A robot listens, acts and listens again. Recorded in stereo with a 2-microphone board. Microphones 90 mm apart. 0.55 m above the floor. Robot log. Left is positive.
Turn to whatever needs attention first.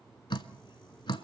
cmd idle
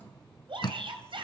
note: The shout: about 70° right or 110° right.
cmd yaw -70
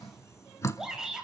end: Found it: a shout, straight ahead, 2 to 4 m away.